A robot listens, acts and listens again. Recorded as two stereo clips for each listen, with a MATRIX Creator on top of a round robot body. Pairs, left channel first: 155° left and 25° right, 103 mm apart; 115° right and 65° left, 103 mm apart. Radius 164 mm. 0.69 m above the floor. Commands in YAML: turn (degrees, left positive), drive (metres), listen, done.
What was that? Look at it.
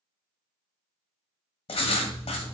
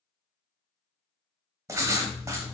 turn: 130
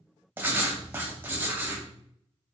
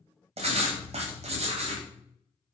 turn: 50
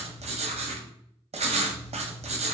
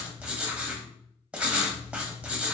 turn: -10
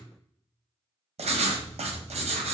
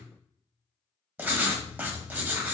done: "Found it: writing, straight ahead, under 1 m away."